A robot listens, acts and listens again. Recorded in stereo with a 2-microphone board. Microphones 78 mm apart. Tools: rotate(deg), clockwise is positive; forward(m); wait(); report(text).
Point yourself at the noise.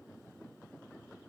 wait()
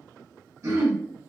rotate(45)
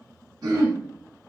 rotate(85)
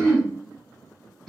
report("Facing the throat clearing.")